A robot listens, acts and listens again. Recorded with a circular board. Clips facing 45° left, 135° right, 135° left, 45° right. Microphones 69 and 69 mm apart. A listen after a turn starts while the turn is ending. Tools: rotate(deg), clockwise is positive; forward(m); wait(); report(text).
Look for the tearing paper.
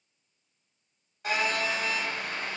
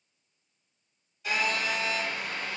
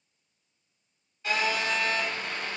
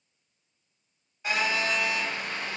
wait()
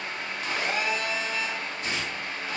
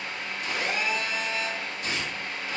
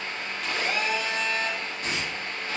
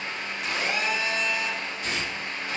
rotate(-95)
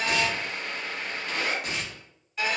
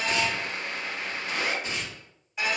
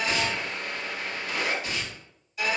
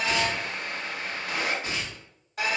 rotate(-15)
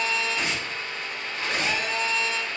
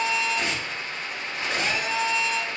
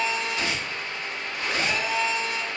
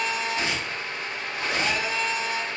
report("Found it: tearing paper, straight ahead.")